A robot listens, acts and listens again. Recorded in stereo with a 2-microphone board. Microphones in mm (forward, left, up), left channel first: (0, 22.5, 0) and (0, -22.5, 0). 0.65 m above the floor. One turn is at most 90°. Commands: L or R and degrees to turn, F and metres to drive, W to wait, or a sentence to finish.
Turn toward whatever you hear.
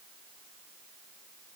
W
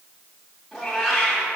R30
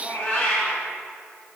L30
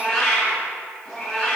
Found it: a cat meowing, straight ahead, 1 to 2 m away.